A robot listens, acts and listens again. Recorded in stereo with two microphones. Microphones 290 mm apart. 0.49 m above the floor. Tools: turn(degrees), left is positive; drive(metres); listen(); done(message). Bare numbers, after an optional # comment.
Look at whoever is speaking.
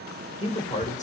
# The man speaking: about 25° left or 155° left.
turn(25)
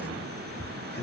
# The man speaking: about 35° left or 145° left.
turn(35)
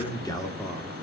done("Facing the man speaking, 1 to 2 m away.")